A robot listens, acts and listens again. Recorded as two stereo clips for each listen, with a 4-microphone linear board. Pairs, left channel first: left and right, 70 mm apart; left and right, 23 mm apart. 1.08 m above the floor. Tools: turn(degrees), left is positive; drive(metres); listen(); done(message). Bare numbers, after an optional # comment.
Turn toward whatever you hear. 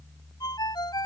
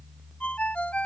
turn(90)
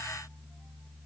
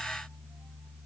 listen()
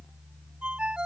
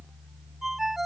# The ringtone is now 15° right.
turn(-15)
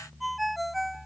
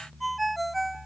done("Facing the ringtone.")